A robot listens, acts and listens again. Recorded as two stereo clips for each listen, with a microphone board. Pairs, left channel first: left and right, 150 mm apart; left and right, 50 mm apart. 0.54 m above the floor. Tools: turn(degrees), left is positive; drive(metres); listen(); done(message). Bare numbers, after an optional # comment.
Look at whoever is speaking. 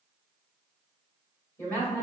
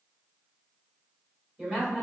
turn(30)
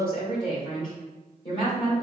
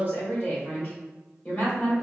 # So it is at 135° left.
turn(135)
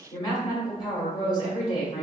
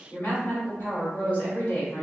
# The woman speaking is now 35° left.
turn(35)
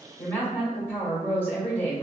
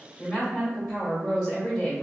# The woman speaking is now 10° left.
turn(10)
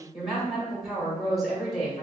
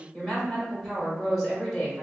done("Found it: a woman speaking, straight ahead, 1 to 2 m away.")